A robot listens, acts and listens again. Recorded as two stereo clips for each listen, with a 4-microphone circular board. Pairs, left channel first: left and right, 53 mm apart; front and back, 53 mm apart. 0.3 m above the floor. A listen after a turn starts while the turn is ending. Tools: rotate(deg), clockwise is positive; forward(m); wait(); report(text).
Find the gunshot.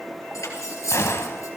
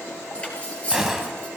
rotate(-100)
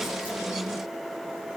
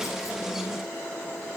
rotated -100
report("Facing where the gunshot came from. I can't hear it now.")